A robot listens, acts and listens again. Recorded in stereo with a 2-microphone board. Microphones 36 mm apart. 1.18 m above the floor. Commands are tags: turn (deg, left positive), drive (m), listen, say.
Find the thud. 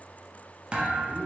<turn deg="-25"/>
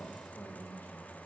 <listen/>
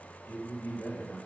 <say>I heard a thud, but can't make it out now. It was about straight ahead or 130° right.</say>